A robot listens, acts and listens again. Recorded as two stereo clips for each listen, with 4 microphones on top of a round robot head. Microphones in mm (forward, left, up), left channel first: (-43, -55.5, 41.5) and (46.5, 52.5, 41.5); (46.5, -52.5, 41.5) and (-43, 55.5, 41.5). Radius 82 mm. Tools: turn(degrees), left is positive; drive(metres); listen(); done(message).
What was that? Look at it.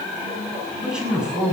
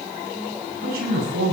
turn(degrees=135)
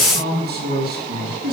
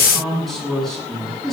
turn(degrees=40)
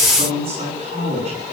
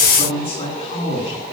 done("Found it: a man speaking, straight ahead.")